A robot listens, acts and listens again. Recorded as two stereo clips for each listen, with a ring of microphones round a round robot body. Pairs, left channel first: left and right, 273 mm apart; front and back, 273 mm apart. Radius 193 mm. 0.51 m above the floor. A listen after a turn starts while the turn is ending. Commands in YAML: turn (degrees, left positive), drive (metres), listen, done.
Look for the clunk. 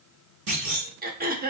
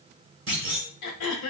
turn: -135
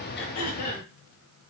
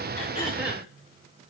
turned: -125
turn: -10
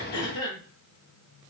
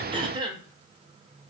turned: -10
done: "I heard a clunk from this way, but can't make it out now."